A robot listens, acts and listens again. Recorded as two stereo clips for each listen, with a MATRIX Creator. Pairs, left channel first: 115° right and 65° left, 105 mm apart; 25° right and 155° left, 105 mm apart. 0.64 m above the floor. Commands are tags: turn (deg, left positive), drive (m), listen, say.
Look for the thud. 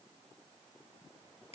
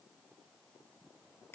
<listen/>
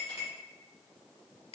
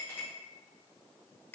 <listen/>
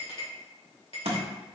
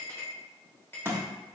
<turn deg="90"/>
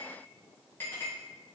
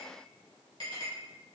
<say>Facing where the thud came from. I can't hear it now.</say>